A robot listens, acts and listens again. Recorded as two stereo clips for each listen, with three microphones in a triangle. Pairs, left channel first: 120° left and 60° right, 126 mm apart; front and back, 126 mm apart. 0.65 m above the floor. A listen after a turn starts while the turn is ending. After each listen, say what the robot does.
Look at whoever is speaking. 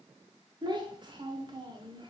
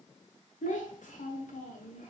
Found it: a child speaking, straight ahead, 1 to 2 m away.